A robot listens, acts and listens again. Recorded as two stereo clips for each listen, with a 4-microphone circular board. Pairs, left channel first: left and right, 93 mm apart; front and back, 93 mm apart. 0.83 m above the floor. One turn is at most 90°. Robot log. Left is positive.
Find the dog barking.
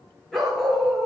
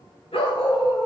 end: Facing the dog barking, over 4 m away.